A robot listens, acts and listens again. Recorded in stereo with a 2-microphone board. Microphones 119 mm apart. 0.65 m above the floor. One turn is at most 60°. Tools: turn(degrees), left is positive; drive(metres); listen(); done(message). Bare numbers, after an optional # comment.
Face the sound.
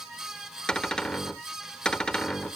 turn(30)
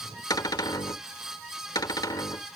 # So it is at 145° left.
turn(60)
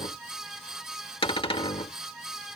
# The cupboard door is now 55° left.
turn(55)
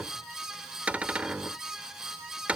# The cupboard door is now 10° right.
turn(-10)
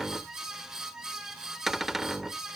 done("Facing the cupboard door.")